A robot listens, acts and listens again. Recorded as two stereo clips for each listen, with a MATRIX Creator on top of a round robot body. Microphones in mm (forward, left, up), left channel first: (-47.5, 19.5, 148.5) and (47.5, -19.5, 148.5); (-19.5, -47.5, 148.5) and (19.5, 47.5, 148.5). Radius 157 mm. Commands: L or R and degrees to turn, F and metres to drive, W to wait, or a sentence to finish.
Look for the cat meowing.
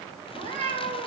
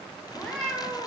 R35
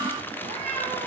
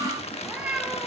R10
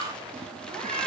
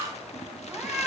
Found it: a cat meowing, straight ahead.